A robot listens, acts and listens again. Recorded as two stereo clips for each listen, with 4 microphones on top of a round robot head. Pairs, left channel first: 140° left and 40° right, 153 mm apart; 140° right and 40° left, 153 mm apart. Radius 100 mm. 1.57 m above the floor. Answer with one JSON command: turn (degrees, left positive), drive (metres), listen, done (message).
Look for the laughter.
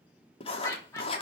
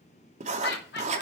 {"turn": -150}
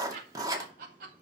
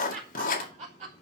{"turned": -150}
{"turn": -10}
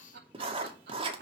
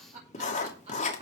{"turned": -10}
{"turn": -10}
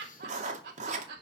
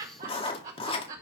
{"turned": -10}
{"done": "Found it: laughter, straight ahead."}